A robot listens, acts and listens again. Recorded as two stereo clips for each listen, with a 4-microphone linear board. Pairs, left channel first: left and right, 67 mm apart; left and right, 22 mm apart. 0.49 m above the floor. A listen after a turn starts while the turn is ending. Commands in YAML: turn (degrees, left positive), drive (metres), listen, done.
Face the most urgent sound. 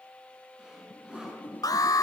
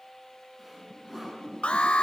turn: 70
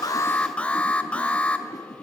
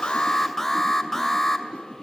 turn: 20
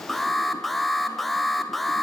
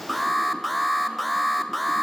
done: "Found it: an alarm, straight ahead."